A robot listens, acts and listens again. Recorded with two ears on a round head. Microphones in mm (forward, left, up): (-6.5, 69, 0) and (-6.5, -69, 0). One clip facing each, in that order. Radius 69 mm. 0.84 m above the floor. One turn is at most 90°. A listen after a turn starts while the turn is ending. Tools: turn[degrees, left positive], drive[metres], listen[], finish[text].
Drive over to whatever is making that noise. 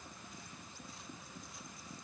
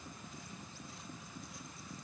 Action: listen[]
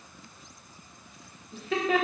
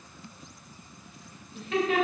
Thought: The laughter: about 75° left or 105° left.
Action: turn[75]
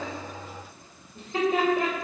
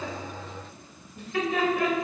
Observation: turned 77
Thought: So it is at 25° left.
Action: turn[25]
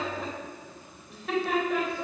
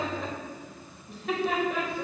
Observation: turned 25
Action: drive[1.0]
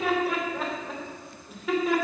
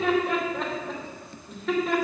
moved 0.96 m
Action: drive[1.0]
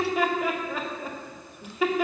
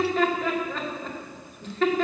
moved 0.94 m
Thought: The laughter is now 10° left.
Action: turn[10]
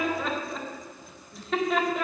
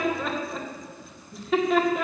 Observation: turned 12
Action: drive[1.0]
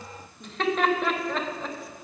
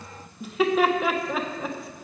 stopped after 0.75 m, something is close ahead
Action: finish[I am next to the laughter.]